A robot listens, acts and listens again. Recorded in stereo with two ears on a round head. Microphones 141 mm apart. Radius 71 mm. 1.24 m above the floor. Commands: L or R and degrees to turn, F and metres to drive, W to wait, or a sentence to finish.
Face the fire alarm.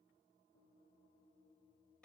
W
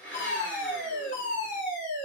L50
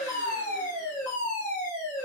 L15
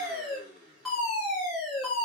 Found it: a fire alarm, straight ahead, 1 to 2 m away.